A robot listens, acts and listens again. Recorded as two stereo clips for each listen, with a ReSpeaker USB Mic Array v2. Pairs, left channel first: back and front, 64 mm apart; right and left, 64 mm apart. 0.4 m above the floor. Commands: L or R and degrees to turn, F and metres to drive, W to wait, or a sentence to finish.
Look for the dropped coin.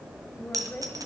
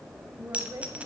L20
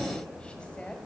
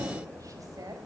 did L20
Facing where the dropped coin came from. I can't hear it now.